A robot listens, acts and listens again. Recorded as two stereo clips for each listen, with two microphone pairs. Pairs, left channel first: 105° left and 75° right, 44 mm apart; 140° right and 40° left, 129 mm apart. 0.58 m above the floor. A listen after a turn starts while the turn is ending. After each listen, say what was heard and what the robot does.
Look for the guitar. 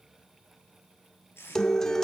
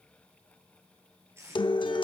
The guitar: straight behind. Turn 180° left.
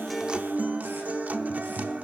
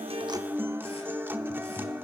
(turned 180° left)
The guitar is now 30° right. Turn 30° right.
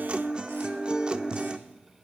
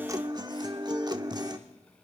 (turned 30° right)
The guitar is now 10° right. Turn 10° right.
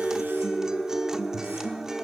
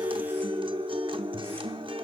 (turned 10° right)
Facing the guitar, under 1 m away.